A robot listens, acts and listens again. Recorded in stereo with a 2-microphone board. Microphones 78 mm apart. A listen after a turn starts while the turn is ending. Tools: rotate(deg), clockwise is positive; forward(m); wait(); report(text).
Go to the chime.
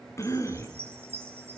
rotate(30)
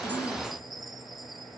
forward(1.0)
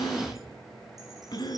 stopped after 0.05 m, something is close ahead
wait()
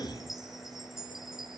report("Something is in my way. I am facing the chime but have not reached it.")